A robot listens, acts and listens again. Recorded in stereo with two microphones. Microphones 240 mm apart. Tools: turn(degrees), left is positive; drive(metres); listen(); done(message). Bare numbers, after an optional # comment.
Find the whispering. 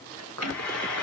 turn(-90)
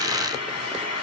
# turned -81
# Nothing new. It was at 10° right.
turn(-10)
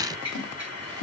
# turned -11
listen()
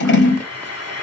done("I heard whispering from this way, but can't make it out now.")